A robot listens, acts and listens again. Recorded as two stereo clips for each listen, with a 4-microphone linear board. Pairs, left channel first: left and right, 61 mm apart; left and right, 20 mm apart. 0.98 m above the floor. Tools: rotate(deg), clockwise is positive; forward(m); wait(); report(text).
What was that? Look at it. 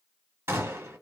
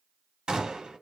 rotate(40)
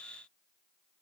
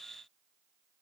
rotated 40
wait()
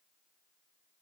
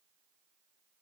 report("I heard a gunshot, but can't make it out now. It was about straight ahead or 100° right.")